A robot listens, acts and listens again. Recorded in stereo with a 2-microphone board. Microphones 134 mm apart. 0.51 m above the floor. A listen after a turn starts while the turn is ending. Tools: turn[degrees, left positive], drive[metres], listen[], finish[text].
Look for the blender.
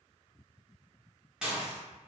Action: listen[]
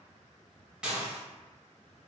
Action: listen[]
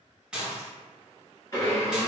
Thought: The blender: about 30° left or 150° left.
Action: turn[30]
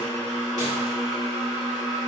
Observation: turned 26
Action: finish[Facing the blender.]